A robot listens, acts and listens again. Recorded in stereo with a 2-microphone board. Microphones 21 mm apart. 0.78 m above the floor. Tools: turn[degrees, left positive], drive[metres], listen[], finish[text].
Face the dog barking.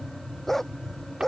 Thought: The dog barking: about 20° left or 160° left.
Action: turn[20]
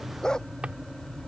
Thought: So it is at 140° left.
Action: turn[140]
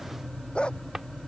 Thought: The dog barking is now 50° left.
Action: turn[50]
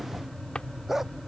Thought: The dog barking is now 20° right.
Action: turn[-20]
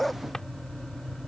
Action: finish[Found it: a dog barking, straight ahead.]